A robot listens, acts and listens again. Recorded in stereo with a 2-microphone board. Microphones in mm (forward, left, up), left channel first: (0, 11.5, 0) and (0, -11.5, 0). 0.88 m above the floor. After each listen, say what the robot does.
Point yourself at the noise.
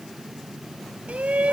Turn 90° right.
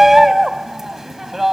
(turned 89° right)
Turn 15° right.
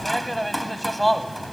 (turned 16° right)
Facing the shout.